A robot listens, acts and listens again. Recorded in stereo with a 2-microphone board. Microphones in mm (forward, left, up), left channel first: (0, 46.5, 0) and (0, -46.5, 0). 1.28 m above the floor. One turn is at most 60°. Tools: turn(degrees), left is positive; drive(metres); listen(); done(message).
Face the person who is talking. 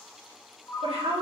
turn(degrees=-60)
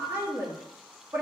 turn(degrees=-25)
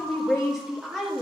done("Found it: a woman speaking, straight ahead, 1 to 2 m away.")